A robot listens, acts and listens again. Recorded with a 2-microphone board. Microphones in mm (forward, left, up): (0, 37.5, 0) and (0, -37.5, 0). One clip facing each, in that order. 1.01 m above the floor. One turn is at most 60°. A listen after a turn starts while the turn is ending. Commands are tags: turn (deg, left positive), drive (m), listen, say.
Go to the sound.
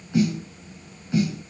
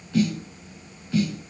<turn deg="20"/>
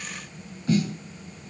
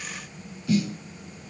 <turn deg="60"/>
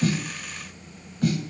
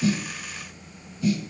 <turn deg="60"/>
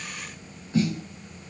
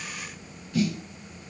<turn deg="30"/>
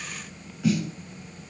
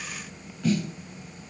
<drive m="1.0"/>
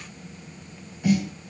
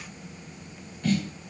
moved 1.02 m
<turn deg="10"/>
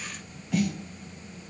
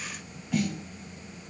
<drive m="1.0"/>
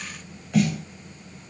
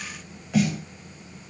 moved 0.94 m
<drive m="1.0"/>
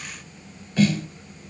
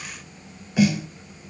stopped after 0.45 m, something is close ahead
<turn deg="-15"/>
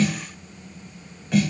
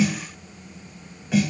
<say>I am next to the snare drum.</say>